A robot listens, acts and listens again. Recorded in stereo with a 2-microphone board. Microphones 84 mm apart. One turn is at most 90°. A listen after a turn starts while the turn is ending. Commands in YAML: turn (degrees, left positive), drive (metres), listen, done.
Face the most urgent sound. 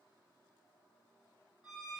listen: true
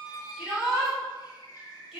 turn: -30
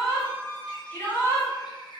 turn: 25
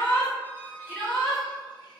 turn: 15
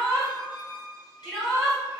done: "Facing the shout, 1 to 2 m away."